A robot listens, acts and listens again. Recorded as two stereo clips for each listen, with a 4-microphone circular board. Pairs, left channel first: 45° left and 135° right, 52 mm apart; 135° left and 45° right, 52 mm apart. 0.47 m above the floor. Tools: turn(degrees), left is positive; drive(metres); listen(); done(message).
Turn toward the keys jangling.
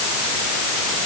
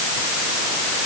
listen()
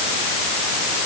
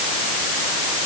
listen()
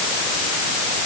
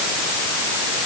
done("I can't make out keys jangling to turn to.")